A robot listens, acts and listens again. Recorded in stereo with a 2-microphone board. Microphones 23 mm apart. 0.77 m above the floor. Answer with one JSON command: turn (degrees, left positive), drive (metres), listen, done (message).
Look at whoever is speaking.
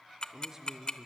{"turn": -25}
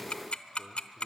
{"listen": true}
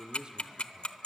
{"turn": -135}
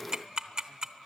{"listen": true}
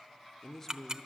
{"turn": 20}
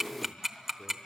{"listen": true}
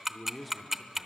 {"done": "Facing the man speaking."}